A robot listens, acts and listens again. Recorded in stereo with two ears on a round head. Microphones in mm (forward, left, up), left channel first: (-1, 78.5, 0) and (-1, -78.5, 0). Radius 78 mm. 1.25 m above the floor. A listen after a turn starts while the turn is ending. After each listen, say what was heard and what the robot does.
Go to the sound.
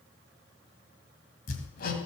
The hammering: about 55° left or 125° left. Turn 55° left.
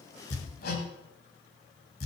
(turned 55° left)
So it is at 65° left. Turn 65° left.
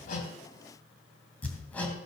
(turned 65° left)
The hammering is now 10° left. Turn 10° left.
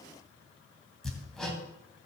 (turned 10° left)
Drive 1.0 m forward.
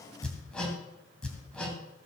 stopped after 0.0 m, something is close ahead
Something is in my way. I am facing the hammering but have not reached it.